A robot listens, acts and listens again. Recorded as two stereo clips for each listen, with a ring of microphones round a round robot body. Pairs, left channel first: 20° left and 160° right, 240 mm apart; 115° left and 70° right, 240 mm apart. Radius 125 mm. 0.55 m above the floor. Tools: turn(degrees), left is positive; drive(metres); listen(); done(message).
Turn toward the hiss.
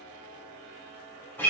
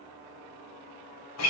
listen()
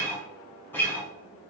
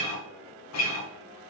listen()
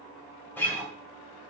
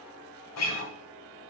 done("I can't make out a hiss to turn to.")